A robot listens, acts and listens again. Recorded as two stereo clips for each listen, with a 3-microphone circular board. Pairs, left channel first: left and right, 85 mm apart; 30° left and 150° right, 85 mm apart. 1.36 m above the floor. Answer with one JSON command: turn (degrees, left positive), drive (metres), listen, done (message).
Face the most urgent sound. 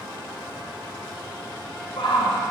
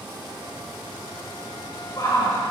{"turn": 75}
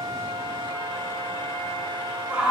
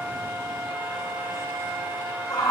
{"turn": -10}
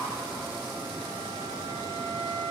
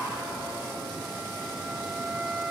{"listen": true}
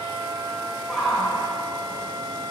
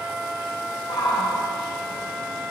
{"done": "Facing the shout, over 4 m away."}